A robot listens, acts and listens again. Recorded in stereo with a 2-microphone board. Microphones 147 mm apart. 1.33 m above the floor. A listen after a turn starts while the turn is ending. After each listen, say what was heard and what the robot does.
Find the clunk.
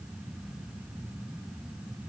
Keep listening.
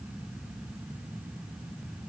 Keep listening.
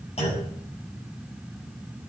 The clunk: about 45° left or 135° left. Turn 45° left.
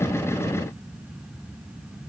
Keep listening.
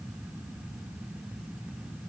I heard a clunk, but can't make it out now. It was about straight ahead or 90° left.